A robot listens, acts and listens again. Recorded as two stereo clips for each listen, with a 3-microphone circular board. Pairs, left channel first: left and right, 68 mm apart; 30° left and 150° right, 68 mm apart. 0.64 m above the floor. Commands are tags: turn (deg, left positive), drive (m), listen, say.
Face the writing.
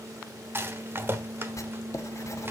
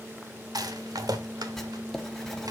<turn deg="115"/>
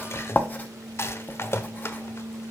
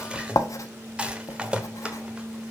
<turn deg="35"/>
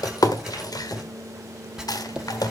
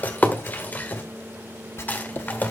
<turn deg="-10"/>
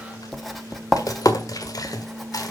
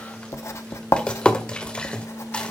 <say>Facing the writing, 1 to 2 m away.</say>